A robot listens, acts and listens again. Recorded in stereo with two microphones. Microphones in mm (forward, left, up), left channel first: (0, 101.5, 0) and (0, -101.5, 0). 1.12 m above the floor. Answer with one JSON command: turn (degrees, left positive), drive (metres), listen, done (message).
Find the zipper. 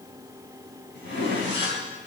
{"turn": 65}
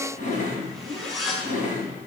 {"done": "Facing the zipper, over 4 m away."}